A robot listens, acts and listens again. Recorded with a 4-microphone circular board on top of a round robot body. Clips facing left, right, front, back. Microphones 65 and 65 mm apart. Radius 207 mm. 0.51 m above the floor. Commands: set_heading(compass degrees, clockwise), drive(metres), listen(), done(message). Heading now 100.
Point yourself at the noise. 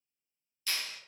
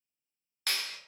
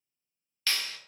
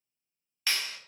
set_heading(205)
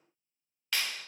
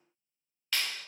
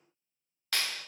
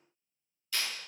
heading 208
done("Facing the clap.")